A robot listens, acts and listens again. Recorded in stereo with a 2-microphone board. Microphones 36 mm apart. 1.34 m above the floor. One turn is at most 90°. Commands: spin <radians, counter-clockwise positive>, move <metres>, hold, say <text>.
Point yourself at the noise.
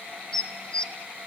spin 0.44
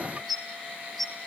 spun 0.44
say Found it: dishes clattering, straight ahead.